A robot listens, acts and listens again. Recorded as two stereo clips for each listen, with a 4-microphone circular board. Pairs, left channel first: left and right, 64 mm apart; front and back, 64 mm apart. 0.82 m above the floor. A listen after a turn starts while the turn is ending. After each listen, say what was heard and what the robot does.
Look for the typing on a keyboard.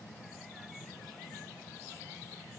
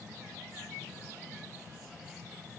Keep listening.
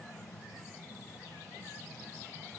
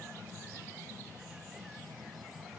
Keep listening.
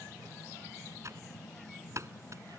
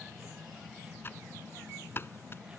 The typing on a keyboard: 50° right. Turn 50° right.
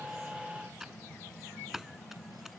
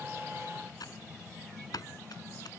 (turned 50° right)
Facing the typing on a keyboard.